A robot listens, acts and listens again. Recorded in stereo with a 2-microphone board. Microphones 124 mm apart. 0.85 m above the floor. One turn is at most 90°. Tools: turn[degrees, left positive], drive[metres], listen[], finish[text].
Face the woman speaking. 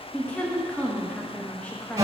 Action: turn[30]
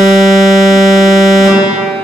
Action: listen[]
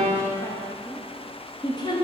Thought: So it is at 135° left.
Action: turn[90]
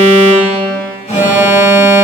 Thought: Nothing new. It was at 45° left.
Action: turn[45]
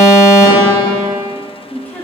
Thought: The woman speaking is now 15° left.
Action: turn[15]
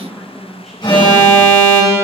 Action: finish[Facing the woman speaking, under 1 m away.]